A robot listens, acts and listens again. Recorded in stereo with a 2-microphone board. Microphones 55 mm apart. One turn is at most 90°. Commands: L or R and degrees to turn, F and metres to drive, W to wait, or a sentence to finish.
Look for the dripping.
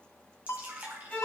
R30
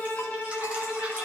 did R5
W
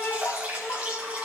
R25
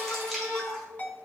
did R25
Found it: dripping, straight ahead, 2 to 4 m away.